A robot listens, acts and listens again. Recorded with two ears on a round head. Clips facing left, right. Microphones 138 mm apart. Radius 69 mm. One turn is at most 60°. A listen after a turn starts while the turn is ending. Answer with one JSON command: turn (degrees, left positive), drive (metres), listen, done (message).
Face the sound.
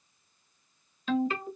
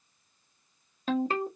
{"turn": -35}
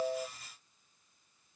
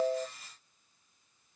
{"listen": true}
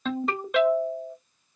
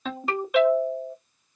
{"done": "Found it: a ringtone, straight ahead, under 1 m away."}